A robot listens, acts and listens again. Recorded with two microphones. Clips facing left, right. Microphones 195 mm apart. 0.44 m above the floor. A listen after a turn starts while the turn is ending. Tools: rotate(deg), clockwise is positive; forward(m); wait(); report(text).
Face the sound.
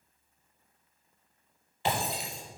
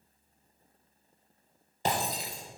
rotate(45)
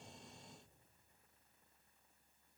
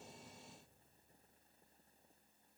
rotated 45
wait()
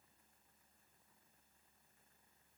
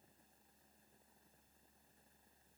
report("I heard breaking glass, but can't make it out now. It was about straight ahead or 90° right.")